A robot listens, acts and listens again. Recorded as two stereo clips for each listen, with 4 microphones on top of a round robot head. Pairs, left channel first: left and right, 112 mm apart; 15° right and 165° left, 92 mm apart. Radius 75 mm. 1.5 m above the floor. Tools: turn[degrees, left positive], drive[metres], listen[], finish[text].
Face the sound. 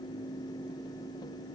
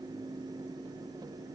Action: listen[]
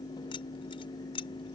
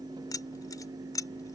Thought: The keys jangling: 35° left.
Action: turn[35]
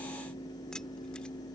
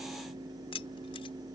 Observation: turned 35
Action: finish[Found it: keys jangling, straight ahead.]